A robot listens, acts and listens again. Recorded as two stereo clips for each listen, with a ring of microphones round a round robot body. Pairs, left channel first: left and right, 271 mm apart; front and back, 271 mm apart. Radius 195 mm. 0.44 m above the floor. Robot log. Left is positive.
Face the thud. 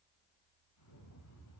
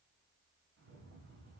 cmd idle
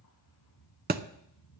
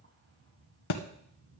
note: The thud: 30° right.
cmd yaw -30
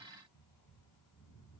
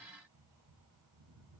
end: I heard a thud from this way, but can't make it out now.